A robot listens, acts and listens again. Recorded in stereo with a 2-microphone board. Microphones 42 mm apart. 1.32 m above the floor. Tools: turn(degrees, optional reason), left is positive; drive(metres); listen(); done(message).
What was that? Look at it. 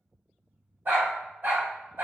turn(degrees=-55, reason="The dog barking: about 55° right or 125° right.")
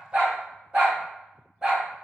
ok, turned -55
turn(degrees=-15, reason="So it is at 15° right.")
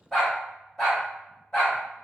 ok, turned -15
turn(degrees=20, reason="The dog barking is now 20° left.")
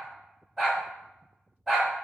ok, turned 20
done("Found it: a dog barking, straight ahead, 2 to 4 m away.")